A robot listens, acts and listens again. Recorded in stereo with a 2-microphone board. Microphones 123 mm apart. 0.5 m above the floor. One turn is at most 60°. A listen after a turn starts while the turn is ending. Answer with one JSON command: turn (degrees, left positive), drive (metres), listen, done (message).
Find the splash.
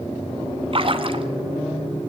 {"turn": -50}
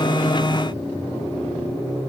{"listen": true}
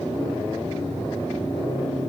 {"done": "I heard a splash, but can't make it out now. It was about straight ahead or 80° right."}